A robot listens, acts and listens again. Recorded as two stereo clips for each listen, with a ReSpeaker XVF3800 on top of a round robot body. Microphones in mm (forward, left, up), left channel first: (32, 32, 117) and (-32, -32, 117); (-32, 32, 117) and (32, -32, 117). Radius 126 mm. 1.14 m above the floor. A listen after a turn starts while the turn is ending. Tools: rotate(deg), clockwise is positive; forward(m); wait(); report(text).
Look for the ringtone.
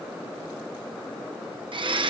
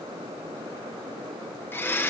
wait()
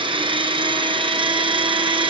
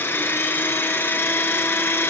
wait()
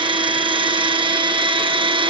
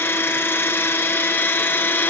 report("I can't make out a ringtone to turn to.")